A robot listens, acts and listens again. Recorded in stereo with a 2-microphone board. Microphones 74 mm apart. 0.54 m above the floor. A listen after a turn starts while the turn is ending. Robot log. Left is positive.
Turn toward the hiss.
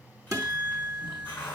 note: The hiss: about 25° left or 155° left.
cmd yaw +25
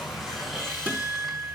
end: Facing the hiss, over 4 m away.